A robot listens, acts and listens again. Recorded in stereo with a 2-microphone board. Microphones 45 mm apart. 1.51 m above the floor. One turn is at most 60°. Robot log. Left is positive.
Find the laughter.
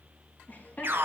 note: The laughter: about 40° left or 140° left.
cmd yaw +40
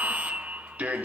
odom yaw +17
cmd idle
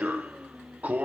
cmd idle
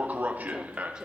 note: So it is at 15° right.
cmd yaw -15
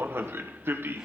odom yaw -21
cmd idle
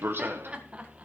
note: The laughter is now 30° right.
cmd yaw -30
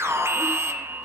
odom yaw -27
cmd idle
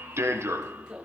note: The laughter is now 20° right.
cmd yaw -20
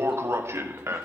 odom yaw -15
cmd idle
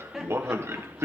end: Found it: laughter, straight ahead.